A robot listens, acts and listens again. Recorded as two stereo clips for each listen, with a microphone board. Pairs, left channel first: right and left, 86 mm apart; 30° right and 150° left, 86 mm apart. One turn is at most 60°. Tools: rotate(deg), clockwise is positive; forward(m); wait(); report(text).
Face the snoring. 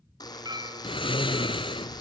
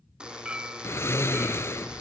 rotate(60)
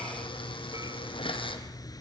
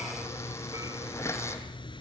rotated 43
rotate(50)
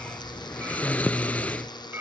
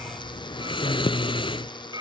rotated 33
rotate(15)
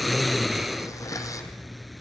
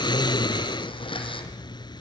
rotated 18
report("Facing the snoring, under 1 m away.")